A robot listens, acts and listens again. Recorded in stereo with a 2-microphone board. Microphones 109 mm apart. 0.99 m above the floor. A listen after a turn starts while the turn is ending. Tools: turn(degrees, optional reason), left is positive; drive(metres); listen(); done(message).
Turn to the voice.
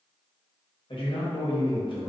turn(degrees=50, reason="The man speaking: about 50° left or 130° left.")
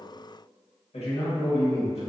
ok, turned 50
turn(degrees=75, reason="So it is at 75° left.")
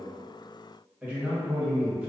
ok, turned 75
turn(degrees=-10, reason="The man speaking is now 10° right.")
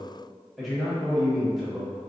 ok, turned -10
done("Found it: a man speaking, straight ahead.")